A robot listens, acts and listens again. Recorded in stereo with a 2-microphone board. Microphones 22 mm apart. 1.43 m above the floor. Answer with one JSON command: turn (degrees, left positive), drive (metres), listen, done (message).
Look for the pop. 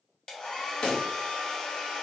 {"turn": 50}
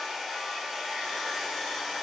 {"listen": true}
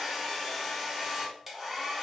{"done": "I heard a pop, but can't make it out now. It was about straight ahead or 80° left."}